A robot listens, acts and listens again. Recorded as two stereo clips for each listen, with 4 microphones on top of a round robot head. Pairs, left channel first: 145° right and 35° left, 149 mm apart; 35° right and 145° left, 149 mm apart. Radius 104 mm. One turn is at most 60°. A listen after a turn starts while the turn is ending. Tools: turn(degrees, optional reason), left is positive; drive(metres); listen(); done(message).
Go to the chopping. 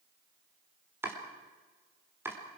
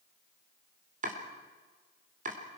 turn(degrees=60, reason="The chopping: 110° left.")
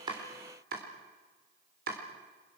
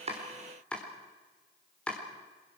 turn(degrees=45, reason="The chopping is now 45° left.")
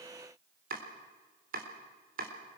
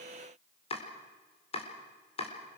turn(degrees=15, reason="The chopping is now 15° left.")
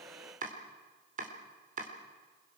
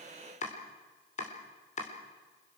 drive(metres=1.0)
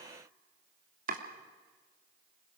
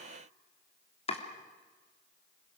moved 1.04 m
turn(degrees=10, reason="The chopping is now 10° left.")
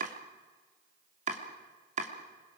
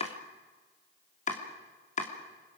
drive(metres=1.0)
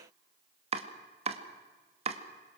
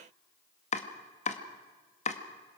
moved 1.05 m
drive(metres=1.0)
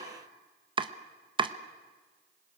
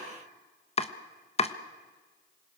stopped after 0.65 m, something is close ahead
turn(degrees=-10, reason="The chopping is now 10° right.")
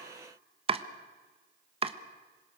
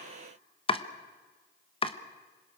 done("Arrived at the chopping, straight ahead.")